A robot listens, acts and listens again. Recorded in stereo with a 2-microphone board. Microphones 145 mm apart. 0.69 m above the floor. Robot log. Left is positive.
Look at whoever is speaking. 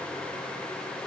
cmd idle
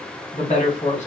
note: The woman speaking: about 60° left or 120° left.
cmd yaw +60
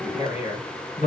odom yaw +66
note: So it is at 55° left.
cmd yaw +55
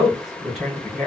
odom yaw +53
end: Found it: a woman speaking, straight ahead.